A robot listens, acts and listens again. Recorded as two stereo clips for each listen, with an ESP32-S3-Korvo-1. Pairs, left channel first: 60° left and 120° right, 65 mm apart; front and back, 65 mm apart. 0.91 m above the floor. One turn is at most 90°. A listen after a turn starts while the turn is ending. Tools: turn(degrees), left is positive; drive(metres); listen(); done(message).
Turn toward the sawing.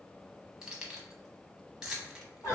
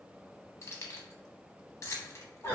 listen()
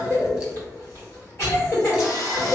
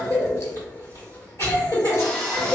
turn(degrees=70)
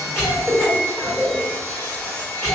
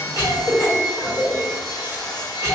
done("Found it: sawing, straight ahead.")